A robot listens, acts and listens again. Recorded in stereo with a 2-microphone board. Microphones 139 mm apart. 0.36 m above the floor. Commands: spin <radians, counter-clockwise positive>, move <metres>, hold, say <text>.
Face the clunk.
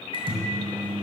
hold
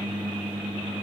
hold
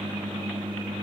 say I can't make out a clunk, only a microwave.